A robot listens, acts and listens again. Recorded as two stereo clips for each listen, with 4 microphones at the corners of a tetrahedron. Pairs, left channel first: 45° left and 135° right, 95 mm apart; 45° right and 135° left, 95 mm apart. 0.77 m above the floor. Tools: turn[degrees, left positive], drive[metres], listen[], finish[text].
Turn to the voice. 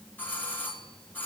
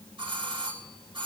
Action: listen[]
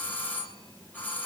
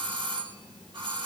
Action: listen[]
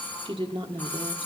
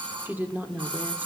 Thought: The woman speaking: 155° right.
Action: turn[-155]
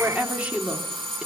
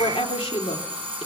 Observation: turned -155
Thought: The woman speaking is now 60° right.
Action: turn[-60]
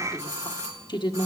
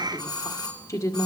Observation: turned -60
Thought: The woman speaking is now 10° left.
Action: turn[10]
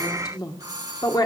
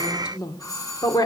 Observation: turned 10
Action: finish[Found it: a woman speaking, straight ahead, 1 to 2 m away.]